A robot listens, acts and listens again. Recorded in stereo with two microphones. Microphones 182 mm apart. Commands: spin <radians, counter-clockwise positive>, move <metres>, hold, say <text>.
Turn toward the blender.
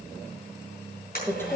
spin 0.96
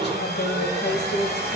spin 1.13
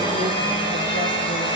spin 0.52
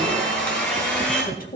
say Found it: a blender, straight ahead, over 4 m away.